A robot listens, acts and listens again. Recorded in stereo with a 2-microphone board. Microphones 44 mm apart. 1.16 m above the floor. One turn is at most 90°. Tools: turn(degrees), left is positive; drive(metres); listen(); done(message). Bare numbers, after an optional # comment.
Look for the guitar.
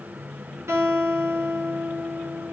# The guitar: about 65° right or 115° right.
turn(-65)
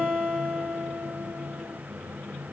done("Facing the guitar.")